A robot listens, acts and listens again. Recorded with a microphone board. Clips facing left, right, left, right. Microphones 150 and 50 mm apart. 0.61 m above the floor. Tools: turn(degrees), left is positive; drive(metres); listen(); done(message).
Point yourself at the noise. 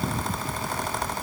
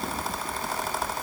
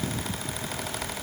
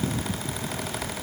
listen()
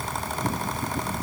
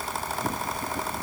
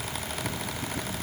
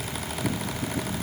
listen()
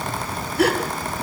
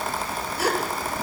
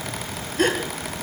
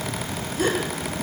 turn(degrees=60)
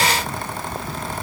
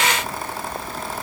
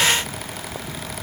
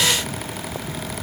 listen()
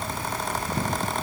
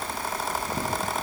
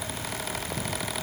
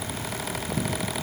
done("I heard a gasp, but can't make it out now. It was about straight ahead or 60° left.")